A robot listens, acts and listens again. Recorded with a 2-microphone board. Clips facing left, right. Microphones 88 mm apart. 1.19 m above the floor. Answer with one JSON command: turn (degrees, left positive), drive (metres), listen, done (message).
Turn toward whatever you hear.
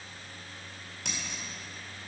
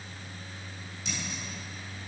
{"turn": 70}
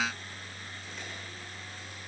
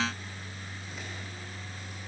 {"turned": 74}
{"listen": true}
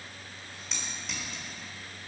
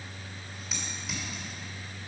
{"done": "Facing the scissors."}